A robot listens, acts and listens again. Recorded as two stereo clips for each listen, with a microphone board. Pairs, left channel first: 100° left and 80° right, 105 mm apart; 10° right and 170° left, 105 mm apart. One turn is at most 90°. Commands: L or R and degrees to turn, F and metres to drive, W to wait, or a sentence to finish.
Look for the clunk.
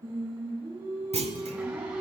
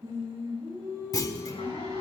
R70
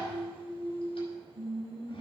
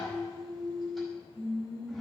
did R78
L10
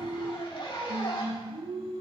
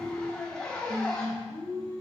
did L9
Facing where the clunk came from. I can't hear it now.